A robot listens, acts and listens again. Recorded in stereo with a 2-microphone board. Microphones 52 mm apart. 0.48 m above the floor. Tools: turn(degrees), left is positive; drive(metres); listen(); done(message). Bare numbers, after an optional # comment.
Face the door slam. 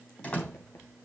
# The door slam: about 25° left or 155° left.
turn(25)
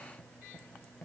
listen()
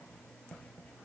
done("I heard a door slam, but can't make it out now. It was about straight ahead or 130° left.")